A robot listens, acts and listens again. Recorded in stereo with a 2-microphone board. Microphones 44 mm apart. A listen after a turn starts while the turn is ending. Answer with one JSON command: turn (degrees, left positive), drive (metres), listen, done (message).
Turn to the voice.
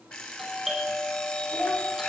{"turn": -65}
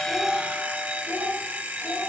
{"turn": -40}
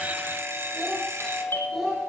{"done": "Found it: a child speaking, straight ahead."}